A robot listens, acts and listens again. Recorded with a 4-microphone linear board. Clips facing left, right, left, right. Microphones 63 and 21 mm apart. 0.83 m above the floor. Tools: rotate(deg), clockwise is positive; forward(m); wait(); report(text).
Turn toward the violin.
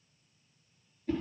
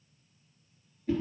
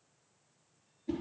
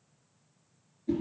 wait()
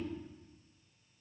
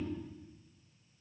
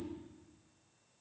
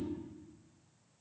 wait()
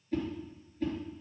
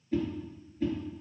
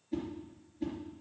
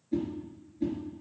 report("I can't make out a violin, only a whoosh.")